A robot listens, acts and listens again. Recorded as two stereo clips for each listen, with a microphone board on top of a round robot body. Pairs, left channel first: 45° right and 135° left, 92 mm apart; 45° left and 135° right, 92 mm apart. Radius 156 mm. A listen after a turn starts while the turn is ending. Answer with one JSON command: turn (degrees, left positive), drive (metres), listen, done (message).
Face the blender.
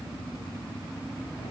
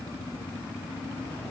{"listen": true}
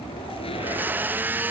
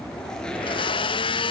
{"turn": 65}
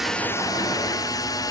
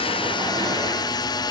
{"done": "Found it: a blender, straight ahead."}